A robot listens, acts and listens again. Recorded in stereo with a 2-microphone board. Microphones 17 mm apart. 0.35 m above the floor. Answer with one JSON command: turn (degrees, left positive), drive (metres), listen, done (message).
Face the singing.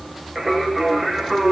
{"turn": -30}
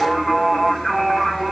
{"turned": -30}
{"turn": 20}
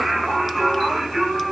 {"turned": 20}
{"done": "Found it: singing, straight ahead, over 4 m away."}